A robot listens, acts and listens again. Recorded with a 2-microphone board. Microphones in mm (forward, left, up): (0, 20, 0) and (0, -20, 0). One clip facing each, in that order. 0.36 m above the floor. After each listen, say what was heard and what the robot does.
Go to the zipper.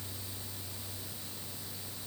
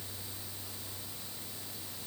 Keep listening.
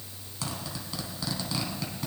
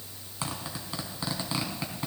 The zipper: about 25° right or 155° right. Turn 25° right.
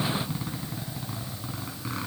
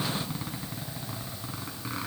Drive 1.0 m forward.
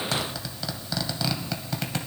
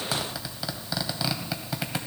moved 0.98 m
The zipper is now 10° right. Turn 10° right.
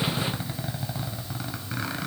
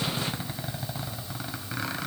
Drive 1.0 m forward.
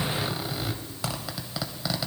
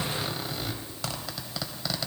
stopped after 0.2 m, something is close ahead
I am next to the zipper.